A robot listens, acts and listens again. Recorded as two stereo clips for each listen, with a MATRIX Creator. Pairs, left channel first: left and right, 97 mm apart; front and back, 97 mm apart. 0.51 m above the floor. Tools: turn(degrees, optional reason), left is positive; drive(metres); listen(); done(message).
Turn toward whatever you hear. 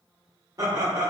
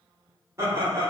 turn(degrees=-130, reason="The laughter: 130° right.")
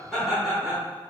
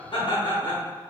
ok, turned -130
done("Found it: laughter, straight ahead, 1 to 2 m away.")